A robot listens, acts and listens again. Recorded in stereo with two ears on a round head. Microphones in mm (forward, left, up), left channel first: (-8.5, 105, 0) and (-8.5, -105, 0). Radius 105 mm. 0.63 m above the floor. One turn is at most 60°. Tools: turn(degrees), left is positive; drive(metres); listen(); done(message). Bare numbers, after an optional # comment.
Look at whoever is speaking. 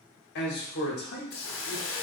# The man speaking: about 50° left or 130° left.
turn(50)
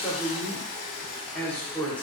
# So it is at 10° left.
turn(10)
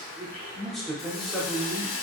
done("Facing the man speaking.")